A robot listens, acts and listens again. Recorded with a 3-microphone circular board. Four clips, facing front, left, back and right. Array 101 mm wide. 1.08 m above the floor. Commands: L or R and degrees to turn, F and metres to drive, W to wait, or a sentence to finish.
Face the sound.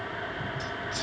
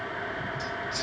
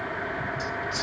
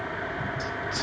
R95
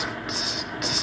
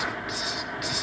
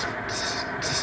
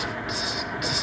R15
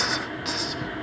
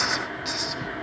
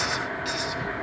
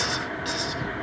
Found it: a hiss, straight ahead.